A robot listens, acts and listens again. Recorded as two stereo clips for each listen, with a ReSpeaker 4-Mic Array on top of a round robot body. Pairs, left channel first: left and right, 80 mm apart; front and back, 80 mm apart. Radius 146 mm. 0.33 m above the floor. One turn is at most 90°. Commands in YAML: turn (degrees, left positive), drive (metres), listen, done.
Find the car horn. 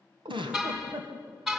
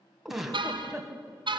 turn: -90
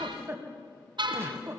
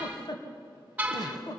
turn: -90
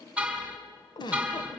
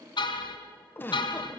turn: -15
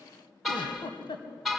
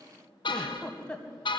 done: "Facing the car horn, 2 to 4 m away."